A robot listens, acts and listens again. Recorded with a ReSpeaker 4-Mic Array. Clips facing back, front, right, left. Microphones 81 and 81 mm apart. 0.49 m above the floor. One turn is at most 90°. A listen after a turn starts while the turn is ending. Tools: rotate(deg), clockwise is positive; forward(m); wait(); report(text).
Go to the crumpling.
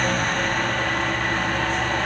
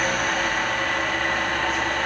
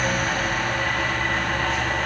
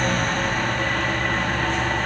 wait()
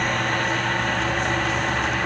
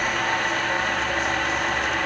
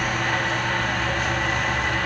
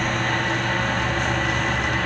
wait()
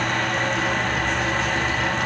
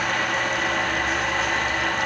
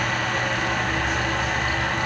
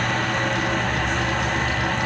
report("I can't make out crumpling to turn to.")